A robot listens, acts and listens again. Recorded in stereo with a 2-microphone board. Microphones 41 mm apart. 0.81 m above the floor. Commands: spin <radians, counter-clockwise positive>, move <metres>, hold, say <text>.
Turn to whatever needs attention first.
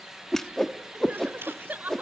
spin -0.70
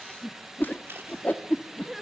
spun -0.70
say Found it: crying, straight ahead.